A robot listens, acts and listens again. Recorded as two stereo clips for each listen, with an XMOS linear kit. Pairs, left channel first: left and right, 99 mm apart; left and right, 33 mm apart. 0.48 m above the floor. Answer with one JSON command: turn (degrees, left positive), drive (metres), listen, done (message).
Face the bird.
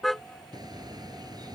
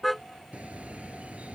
{"turn": -45}
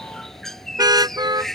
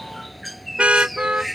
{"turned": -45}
{"done": "Facing the bird."}